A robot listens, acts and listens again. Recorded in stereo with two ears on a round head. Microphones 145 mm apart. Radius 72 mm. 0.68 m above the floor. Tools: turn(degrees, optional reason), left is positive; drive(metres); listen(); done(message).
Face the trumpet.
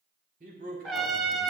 turn(degrees=30)
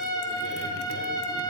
turn(degrees=150, reason="So it is at 150° left.")
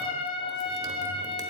turn(degrees=40, reason="The trumpet is now 40° left.")
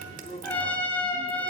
turn(degrees=10, reason="The trumpet is now 10° left.")
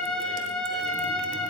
done("Facing the trumpet.")